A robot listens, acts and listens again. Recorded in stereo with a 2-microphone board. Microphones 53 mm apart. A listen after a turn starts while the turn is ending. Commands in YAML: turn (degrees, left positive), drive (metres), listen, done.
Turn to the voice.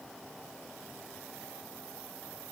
listen: true
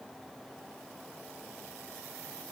listen: true
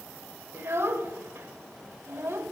turn: -45
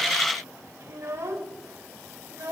turn: -80
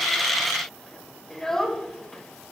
turn: 10
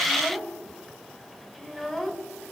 done: "Facing the child speaking."